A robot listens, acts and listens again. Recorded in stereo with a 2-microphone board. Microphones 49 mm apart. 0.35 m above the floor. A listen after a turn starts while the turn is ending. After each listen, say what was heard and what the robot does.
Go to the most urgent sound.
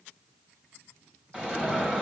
The alarm: about 20° right or 160° right. Turn 20° right.
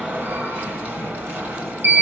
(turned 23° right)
So it is at 135° right. Turn 135° right.
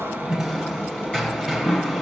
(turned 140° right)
Drive 1.0 m forward.
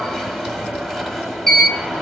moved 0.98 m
Drive 1.0 m forward.
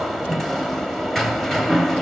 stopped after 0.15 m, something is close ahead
Arrived at the alarm, straight ahead.